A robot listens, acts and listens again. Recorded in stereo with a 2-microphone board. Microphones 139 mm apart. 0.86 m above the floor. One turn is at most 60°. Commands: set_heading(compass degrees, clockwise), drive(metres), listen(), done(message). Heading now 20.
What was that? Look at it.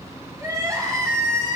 set_heading(40)
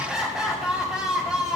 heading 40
done("Facing the crying, over 4 m away.")